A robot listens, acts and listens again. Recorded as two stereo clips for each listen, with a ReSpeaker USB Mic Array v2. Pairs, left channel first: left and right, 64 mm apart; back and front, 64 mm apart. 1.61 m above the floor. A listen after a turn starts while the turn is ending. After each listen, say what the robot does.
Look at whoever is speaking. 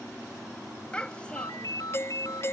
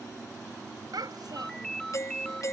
Turn 15° left.
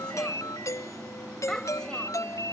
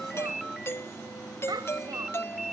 Turn 10° left.
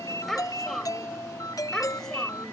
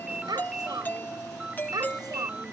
Facing the child speaking.